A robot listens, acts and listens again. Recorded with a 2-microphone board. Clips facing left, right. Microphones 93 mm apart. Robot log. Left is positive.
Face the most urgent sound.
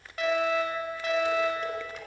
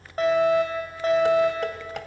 note: The fire alarm: about 35° right or 145° right.
cmd yaw -35
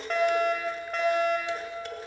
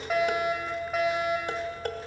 end: Found it: a fire alarm, straight ahead, over 4 m away.